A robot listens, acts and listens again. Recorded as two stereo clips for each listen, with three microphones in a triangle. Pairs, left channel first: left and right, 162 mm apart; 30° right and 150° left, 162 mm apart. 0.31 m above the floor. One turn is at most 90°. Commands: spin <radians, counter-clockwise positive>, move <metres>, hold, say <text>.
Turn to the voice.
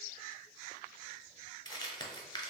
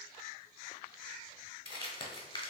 hold
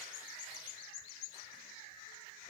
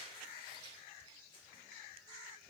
hold
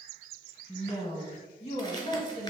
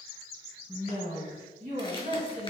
spin 1.57
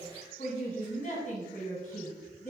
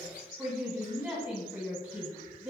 spin 1.31
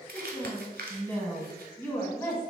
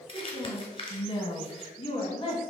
spin 0.35
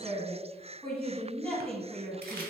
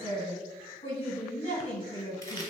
spin 0.17
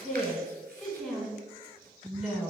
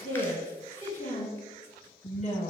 say Facing the woman speaking, 1 to 2 m away.